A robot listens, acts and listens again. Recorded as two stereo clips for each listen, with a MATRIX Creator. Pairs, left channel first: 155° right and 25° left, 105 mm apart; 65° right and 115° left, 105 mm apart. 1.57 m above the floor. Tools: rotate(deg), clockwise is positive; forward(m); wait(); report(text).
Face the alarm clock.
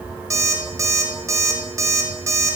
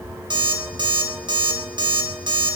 rotate(-80)
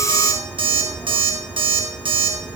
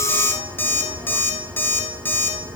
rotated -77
report("Facing the alarm clock.")